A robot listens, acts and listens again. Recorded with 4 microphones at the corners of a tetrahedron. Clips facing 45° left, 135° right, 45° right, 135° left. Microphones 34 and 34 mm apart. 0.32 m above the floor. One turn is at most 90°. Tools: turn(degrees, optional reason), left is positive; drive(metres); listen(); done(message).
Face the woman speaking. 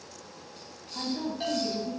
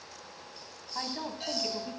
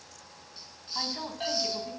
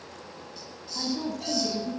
turn(degrees=-90, reason="The woman speaking: 95° right.")
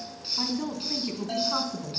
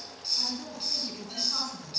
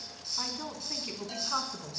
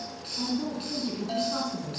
turn(degrees=-10, reason="The woman speaking is now 10° right.")
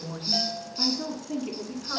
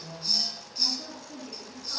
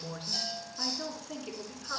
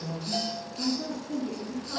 done("Facing the woman speaking, over 4 m away.")